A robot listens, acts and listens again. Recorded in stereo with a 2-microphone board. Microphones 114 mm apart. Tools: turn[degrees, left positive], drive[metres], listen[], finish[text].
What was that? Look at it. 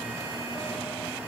Action: listen[]
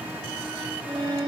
Thought: The violin: about 40° right or 140° right.
Action: turn[-40]
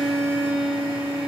Action: finish[Found it: a violin, straight ahead, over 4 m away.]